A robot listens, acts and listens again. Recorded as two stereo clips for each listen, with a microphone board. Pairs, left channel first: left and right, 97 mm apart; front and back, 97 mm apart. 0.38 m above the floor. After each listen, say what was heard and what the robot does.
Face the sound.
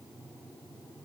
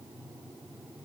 Keep listening.
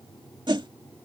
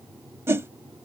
The whoosh: 120° right. Turn 120° right.
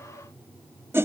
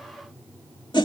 The whoosh is now 30° right. Turn 30° right.
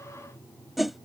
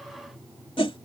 Found it: a whoosh, straight ahead.